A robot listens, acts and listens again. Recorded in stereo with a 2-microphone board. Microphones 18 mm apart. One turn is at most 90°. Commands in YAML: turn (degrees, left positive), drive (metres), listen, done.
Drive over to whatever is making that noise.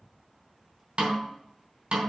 turn: -60
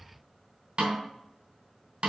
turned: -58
turn: -55
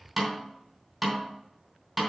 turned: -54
drive: 1.0
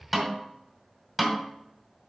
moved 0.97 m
turn: -10
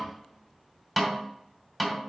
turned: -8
drive: 1.0
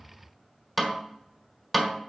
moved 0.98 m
drive: 1.0
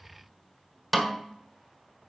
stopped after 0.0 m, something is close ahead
done: "I am next to the snare drum."